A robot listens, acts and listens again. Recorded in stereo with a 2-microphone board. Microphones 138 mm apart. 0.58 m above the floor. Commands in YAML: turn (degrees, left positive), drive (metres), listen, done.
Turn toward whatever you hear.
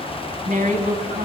turn: -70
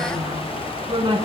turn: -35
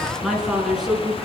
done: "Facing the woman speaking."